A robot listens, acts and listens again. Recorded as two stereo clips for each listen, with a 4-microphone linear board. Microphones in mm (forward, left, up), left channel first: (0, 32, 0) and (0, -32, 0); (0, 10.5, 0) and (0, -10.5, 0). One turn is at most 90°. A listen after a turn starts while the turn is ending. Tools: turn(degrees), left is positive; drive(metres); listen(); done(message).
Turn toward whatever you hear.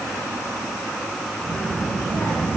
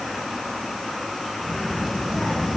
turn(degrees=65)
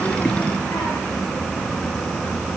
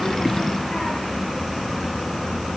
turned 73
turn(degrees=35)
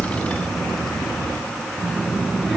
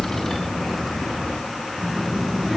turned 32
done("Found it: a child speaking, straight ahead.")